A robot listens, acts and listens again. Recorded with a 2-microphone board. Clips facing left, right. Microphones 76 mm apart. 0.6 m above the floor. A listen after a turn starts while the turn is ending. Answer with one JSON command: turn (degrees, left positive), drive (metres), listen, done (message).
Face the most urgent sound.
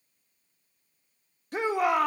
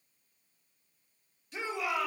{"turn": 55}
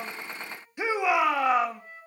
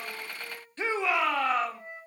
{"turn": 15}
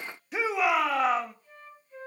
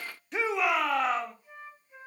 {"done": "Found it: a shout, straight ahead."}